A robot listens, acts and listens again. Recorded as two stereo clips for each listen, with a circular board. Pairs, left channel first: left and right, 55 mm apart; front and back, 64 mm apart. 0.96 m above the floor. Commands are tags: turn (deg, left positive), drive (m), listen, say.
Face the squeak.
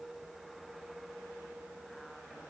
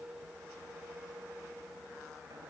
<listen/>
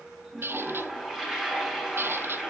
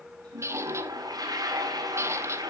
<turn deg="-135"/>
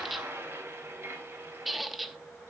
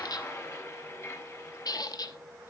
<say>Facing the squeak, under 1 m away.</say>